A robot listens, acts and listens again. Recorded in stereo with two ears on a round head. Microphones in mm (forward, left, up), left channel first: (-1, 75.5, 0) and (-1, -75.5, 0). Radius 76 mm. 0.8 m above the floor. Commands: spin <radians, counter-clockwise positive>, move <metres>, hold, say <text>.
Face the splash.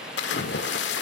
spin 1.57
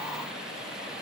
say Facing where the splash came from. I can't hear it now.